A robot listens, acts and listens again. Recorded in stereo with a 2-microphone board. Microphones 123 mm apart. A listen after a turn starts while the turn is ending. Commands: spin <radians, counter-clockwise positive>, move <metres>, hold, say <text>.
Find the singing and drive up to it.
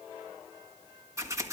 hold
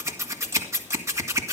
hold
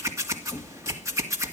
say I can't make out singing, only scissors.